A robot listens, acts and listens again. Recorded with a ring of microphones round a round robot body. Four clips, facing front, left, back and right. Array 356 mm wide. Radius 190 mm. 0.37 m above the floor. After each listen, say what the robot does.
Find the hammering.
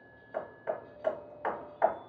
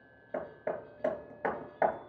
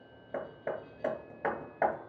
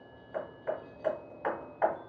Turn 135° left.
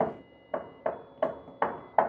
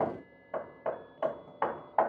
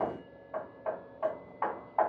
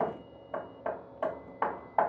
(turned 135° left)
Found it: hammering, straight ahead, 2 to 4 m away.